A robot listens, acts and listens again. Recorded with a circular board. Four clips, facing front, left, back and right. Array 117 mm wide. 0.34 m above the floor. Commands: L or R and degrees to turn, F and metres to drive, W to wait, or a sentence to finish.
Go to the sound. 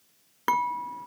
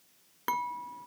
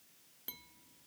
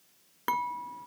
F1.0
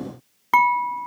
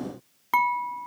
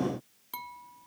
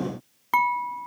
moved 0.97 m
F1.0
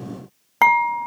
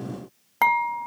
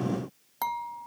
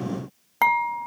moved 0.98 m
F1.0
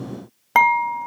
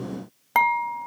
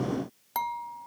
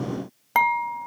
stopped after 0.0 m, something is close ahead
I am next to the dishes clattering.